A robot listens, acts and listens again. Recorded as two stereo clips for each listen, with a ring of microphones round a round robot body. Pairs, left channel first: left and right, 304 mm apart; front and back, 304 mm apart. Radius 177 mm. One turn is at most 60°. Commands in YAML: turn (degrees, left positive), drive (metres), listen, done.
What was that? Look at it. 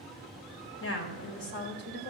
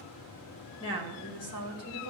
turn: 35
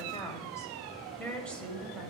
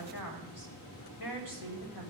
done: "Facing the woman speaking."